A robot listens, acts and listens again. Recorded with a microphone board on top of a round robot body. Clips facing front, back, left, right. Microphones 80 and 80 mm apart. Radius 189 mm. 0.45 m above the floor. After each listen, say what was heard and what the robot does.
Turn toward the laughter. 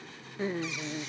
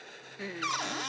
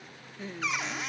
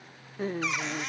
The laughter: 60° right. Turn 60° right.
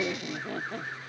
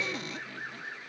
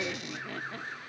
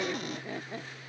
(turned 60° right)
The laughter is now 25° right. Turn 25° right.
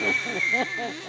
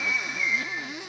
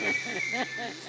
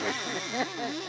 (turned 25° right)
The laughter is now 15° right. Turn 15° right.
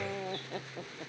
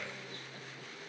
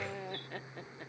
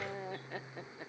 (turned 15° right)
The laughter is now 10° right. Turn 10° right.
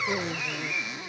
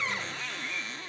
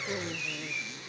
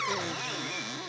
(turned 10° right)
Keep listening.
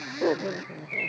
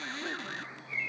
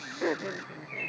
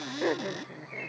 The laughter is now 10° right. Turn 10° right.
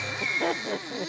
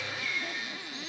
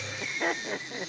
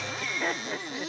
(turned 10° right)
Facing the laughter.